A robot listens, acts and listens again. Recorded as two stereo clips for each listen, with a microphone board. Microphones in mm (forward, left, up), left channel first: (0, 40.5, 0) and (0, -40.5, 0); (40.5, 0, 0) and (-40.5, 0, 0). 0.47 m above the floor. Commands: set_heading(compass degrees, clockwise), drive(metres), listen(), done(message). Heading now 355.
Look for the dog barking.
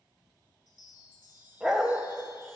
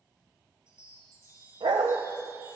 set_heading(165)
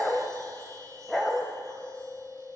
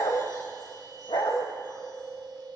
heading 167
done("Found it: a dog barking, straight ahead, under 1 m away.")